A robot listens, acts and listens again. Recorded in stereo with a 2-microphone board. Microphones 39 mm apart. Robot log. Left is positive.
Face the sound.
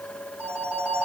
note: The phone ringing: about 50° right or 130° right.
cmd yaw -50
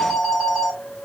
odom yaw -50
end: Found it: a phone ringing, straight ahead, 2 to 4 m away.